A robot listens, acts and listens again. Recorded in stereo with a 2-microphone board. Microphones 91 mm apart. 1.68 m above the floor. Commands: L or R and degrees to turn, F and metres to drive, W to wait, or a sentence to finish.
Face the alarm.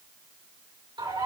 W
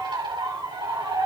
W
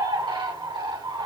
I can't make out an alarm, only a bird.